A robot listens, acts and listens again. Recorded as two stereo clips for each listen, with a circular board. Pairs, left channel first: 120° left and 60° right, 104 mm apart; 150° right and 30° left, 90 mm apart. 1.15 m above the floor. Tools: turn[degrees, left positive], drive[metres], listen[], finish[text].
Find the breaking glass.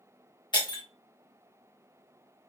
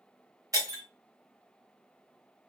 Thought: The breaking glass: 80° left.
Action: turn[80]
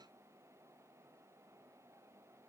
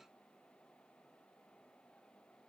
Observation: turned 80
Action: finish[Facing where the breaking glass came from. I can't hear it now.]